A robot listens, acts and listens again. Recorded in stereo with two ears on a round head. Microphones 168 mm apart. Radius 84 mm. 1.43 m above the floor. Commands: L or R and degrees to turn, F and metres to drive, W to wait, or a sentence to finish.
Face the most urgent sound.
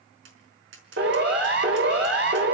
R60
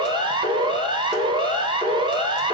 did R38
R25
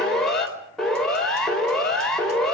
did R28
Facing the siren, over 4 m away.